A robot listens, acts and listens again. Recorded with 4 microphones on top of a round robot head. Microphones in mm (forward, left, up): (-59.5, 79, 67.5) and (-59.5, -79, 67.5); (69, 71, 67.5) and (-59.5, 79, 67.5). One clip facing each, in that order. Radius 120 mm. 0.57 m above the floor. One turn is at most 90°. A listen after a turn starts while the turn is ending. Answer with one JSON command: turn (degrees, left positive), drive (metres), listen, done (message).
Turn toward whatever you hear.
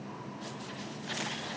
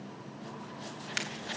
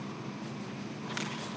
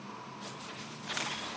{"listen": true}
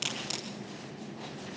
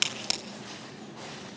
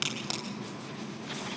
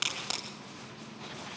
{"turn": -90}
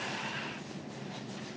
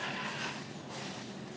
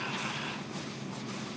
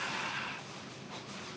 {"done": "I heard a crack from this way, but can't make it out now."}